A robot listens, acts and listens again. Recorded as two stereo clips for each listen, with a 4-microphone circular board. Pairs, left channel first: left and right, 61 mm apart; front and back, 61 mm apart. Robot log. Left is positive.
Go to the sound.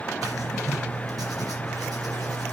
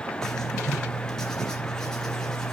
note: The writing: 80° right.
cmd yaw -80
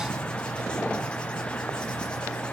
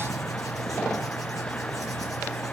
note: The writing is now 15° left.
cmd yaw +15
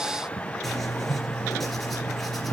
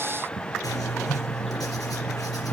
cmd fwd 1.0
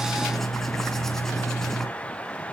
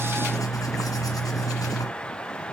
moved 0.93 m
cmd fwd 1.0
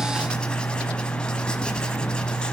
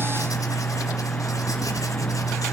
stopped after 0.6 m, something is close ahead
note: The writing is now 15° left.
cmd yaw +15
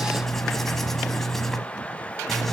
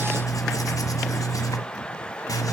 end: Arrived at the writing, straight ahead.